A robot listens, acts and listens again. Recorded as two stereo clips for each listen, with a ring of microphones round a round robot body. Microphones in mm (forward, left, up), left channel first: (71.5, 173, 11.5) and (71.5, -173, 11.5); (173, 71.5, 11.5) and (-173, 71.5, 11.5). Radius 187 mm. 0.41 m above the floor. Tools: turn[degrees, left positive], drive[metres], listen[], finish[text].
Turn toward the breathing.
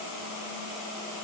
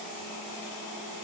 Action: listen[]
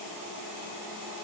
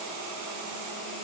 Action: listen[]
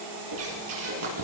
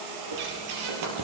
Thought: The breathing: 145° right.
Action: turn[-145]
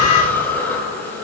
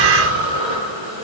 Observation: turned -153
Action: finish[Found it: breathing, straight ahead.]